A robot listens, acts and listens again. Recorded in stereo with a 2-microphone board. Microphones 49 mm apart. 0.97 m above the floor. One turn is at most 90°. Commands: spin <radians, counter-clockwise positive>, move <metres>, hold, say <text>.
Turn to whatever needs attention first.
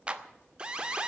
spin -0.35
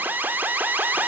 spin -1.57
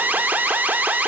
spin -0.70
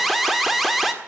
say Facing the alarm, 1 to 2 m away.